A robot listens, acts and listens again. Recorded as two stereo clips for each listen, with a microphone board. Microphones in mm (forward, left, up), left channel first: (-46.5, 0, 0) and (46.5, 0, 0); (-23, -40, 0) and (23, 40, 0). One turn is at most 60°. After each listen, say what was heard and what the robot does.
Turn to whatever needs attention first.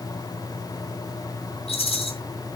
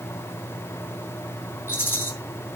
Keep listening.
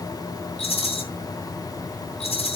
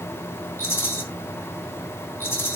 Keep listening.
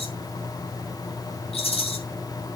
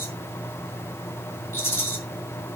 I can't make out anything urgent, only a rattle.